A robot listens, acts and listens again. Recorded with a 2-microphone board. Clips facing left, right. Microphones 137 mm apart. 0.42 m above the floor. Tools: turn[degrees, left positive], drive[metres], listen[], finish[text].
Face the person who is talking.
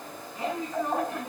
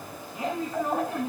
Action: turn[-30]
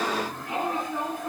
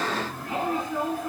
Thought: So it is at 20° left.
Action: turn[20]
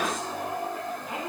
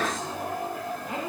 Action: finish[Facing the woman speaking, over 4 m away.]